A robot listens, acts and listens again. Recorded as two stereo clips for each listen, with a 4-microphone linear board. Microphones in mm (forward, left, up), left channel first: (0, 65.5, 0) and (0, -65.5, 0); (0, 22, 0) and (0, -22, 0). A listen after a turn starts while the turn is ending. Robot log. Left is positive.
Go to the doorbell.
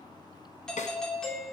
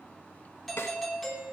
cmd yaw +30
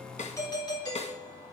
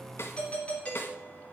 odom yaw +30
note: So it is at 145° left.
cmd yaw +145
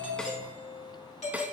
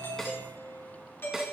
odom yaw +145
note: The doorbell is now 70° left.
cmd yaw +70
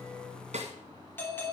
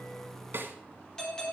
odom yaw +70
note: The doorbell is now 15° left.
cmd yaw +15
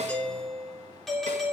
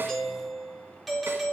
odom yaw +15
cmd fwd 1.0
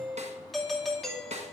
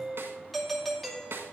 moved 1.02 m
cmd fwd 1.0
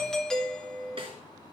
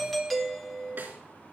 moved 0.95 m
cmd fwd 1.0
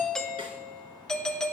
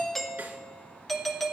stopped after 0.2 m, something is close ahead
end: I am next to the doorbell.